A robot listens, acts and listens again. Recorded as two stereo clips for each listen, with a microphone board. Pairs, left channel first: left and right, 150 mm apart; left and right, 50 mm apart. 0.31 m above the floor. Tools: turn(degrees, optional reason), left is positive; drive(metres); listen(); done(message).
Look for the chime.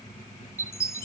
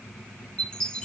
turn(degrees=20, reason="The chime: about 20° left or 160° left.")
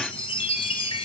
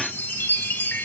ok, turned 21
turn(degrees=140, reason="So it is at 140° left.")
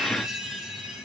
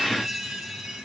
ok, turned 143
done("Facing the chime.")